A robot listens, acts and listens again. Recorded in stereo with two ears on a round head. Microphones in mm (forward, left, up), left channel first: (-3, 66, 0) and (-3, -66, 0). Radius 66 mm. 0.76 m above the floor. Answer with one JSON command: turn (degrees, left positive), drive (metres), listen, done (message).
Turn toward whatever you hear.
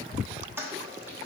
{"turn": -15}
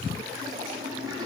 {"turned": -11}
{"turn": -155}
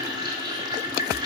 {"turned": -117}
{"turn": -30}
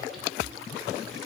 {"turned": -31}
{"listen": true}
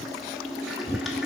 {"done": "Found it: a toilet flushing, straight ahead."}